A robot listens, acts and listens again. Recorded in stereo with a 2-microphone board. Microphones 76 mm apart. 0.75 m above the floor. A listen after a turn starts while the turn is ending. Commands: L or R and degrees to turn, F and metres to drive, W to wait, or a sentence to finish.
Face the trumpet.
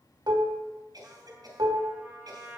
R15
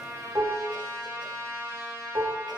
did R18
R145
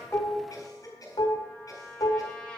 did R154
L10
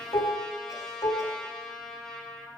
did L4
Facing the trumpet.